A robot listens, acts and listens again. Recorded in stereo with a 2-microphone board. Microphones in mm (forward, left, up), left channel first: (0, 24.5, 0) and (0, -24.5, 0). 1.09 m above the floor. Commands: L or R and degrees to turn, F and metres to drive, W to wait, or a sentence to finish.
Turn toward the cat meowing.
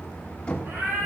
R55
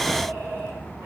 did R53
R65
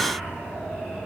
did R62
W
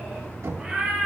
R10
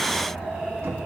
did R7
Found it: a cat meowing, straight ahead, over 4 m away.